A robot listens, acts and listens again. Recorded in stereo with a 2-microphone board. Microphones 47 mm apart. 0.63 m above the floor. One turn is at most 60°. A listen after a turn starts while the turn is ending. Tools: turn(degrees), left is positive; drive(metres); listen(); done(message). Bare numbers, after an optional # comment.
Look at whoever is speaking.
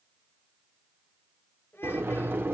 # The child speaking: about 60° left or 120° left.
turn(60)
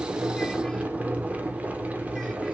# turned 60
listen()
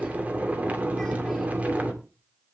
listen()
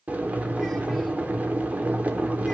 done("I heard a child speaking, but can't make it out now. It was about straight ahead or 60° left.")